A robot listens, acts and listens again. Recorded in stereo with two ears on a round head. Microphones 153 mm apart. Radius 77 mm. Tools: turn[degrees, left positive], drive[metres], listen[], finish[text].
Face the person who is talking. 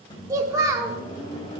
Thought: The child speaking: about 20° right or 160° right.
Action: turn[-20]
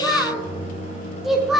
Action: finish[Found it: a child speaking, straight ahead.]